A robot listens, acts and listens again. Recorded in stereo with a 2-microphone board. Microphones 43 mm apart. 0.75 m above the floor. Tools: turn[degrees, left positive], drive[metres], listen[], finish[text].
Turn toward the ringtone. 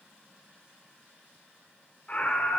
Action: listen[]
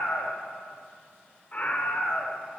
Action: listen[]
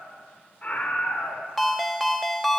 Action: turn[30]
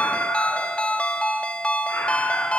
Thought: So it is at 145° left.
Action: turn[145]
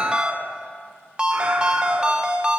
Thought: The ringtone is now 25° right.
Action: turn[-25]
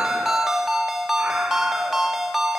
Thought: The ringtone is now 10° right.
Action: turn[-10]
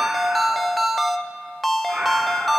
Action: finish[Found it: a ringtone, straight ahead, under 1 m away.]